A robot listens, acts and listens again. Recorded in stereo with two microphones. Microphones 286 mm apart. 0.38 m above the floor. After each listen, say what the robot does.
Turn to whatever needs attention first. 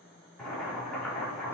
Keep listening.
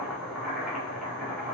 Keep listening.
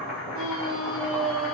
Turn 50° right.
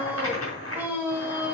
Facing the scream, 1 to 2 m away.